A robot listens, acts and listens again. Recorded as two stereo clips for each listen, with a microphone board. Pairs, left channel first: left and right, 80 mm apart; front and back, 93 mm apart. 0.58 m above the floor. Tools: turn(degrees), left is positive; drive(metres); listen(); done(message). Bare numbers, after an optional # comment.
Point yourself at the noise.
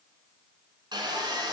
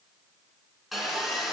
# The sawing: 90° right.
turn(-90)
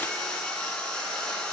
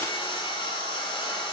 # The sawing is now 10° left.
turn(10)
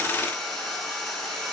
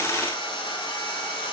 done("Facing the sawing, 1 to 2 m away.")